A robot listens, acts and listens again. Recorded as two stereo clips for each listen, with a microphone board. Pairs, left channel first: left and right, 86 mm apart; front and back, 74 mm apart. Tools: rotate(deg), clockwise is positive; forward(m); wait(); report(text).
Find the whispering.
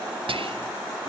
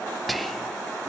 rotate(90)
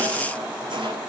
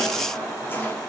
wait()
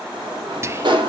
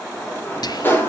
rotate(30)
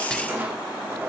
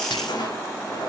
wait()
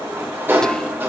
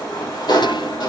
wait()
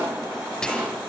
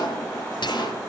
rotate(-10)
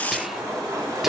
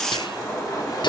wait()
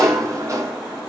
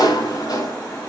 wait()
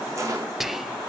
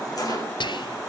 report("Found it: whispering, straight ahead, under 1 m away.")